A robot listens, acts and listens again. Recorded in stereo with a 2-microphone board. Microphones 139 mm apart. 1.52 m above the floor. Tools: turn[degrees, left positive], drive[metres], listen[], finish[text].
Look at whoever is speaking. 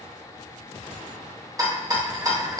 Action: listen[]
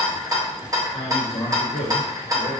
Thought: The man speaking: about 55° left or 125° left.
Action: turn[55]
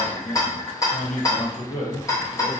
Thought: So it is at 70° left.
Action: turn[70]
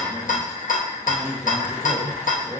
Thought: The man speaking is now 15° left.
Action: turn[15]
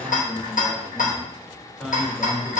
Action: finish[Facing the man speaking, 1 to 2 m away.]